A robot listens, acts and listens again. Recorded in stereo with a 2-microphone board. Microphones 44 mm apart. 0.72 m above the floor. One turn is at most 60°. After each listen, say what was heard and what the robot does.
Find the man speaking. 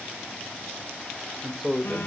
Turn 30° right.
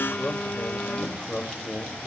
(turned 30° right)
So it is at 15° left. Turn 15° left.
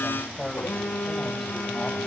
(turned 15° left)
Facing the man speaking, 2 to 4 m away.